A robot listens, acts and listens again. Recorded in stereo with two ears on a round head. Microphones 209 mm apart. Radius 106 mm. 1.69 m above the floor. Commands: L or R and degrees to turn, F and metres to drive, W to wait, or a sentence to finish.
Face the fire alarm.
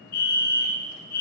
L40
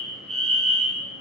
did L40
Facing the fire alarm, 1 to 2 m away.